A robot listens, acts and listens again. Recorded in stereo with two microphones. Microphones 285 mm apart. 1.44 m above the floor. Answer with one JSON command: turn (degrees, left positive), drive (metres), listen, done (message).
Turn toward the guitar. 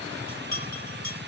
{"listen": true}
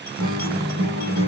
{"turn": -90}
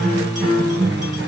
{"done": "Found it: a guitar, straight ahead."}